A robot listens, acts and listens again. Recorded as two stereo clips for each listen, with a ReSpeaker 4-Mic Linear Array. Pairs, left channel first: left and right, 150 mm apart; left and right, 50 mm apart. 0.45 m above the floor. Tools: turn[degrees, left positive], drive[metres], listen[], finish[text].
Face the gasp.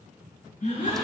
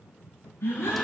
Thought: The gasp: about 65° left or 115° left.
Action: turn[65]
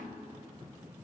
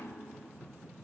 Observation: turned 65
Action: listen[]
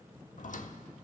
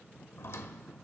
Action: finish[I heard a gasp, but can't make it out now. It was about straight ahead or 50° left.]